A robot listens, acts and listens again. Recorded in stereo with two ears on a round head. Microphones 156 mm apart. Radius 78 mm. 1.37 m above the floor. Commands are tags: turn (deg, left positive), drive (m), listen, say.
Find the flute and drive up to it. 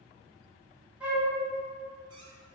<turn deg="-30"/>
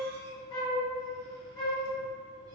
<turn deg="25"/>
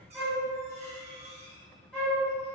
<drive m="1.0"/>
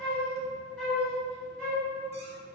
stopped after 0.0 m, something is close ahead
<say>Blocked. The flute is further on, straight ahead.</say>